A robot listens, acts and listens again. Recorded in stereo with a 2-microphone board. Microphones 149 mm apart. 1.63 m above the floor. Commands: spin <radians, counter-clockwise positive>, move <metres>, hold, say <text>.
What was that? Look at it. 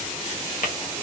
spin 1.57
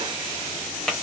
say Facing the tapping.